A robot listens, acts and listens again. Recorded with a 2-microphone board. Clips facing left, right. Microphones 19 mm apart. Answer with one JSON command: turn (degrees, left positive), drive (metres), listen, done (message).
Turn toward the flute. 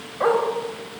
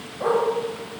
{"listen": true}
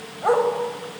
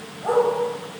{"listen": true}
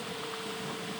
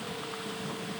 {"done": "I can't make out a flute to turn to."}